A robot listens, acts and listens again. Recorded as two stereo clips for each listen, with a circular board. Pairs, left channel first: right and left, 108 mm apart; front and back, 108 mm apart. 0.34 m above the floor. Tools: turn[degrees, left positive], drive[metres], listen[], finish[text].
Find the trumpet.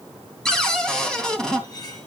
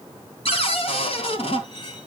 Action: listen[]
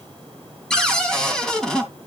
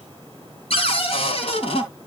Action: listen[]
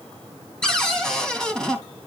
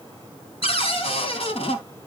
Action: finish[I can't make out a trumpet to turn to.]